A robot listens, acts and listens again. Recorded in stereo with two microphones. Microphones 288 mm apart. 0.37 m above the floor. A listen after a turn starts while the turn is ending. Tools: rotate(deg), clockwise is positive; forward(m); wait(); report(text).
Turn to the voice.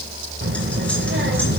rotate(40)
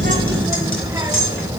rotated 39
rotate(10)
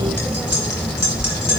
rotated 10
report("Facing the child speaking, 1 to 2 m away.")